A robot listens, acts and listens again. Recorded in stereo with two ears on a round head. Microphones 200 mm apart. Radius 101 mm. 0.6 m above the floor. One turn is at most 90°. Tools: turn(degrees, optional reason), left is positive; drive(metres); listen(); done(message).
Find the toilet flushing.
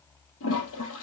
turn(degrees=75, reason="The toilet flushing: about 75° left or 105° left.")
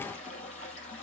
turn(degrees=30, reason="So it is at 30° left.")
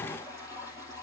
turn(degrees=15, reason="The toilet flushing is now 15° left.")
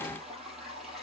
done("Facing the toilet flushing.")